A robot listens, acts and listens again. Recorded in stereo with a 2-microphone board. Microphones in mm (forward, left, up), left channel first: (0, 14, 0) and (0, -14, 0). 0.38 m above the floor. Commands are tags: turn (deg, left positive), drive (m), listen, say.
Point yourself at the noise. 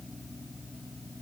<listen/>
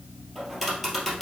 <turn deg="30"/>
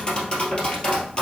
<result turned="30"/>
<turn deg="150"/>
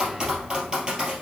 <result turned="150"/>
<turn deg="-25"/>
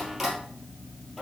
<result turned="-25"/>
<say>Facing the tapping, 1 to 2 m away.</say>